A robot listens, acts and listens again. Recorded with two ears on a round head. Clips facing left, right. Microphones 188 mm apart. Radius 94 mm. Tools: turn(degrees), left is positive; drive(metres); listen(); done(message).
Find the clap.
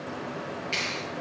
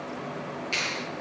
turn(degrees=-30)
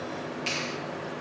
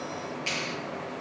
turn(degrees=20)
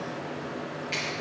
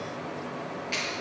done("Facing the clap, over 4 m away.")